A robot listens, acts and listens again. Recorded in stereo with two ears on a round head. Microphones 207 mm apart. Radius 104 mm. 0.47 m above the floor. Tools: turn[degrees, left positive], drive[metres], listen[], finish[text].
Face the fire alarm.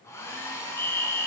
Action: turn[30]
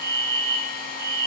Thought: So it is at 15° right.
Action: turn[-15]
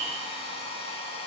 Action: listen[]
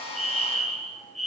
Action: finish[Found it: a fire alarm, straight ahead, 2 to 4 m away.]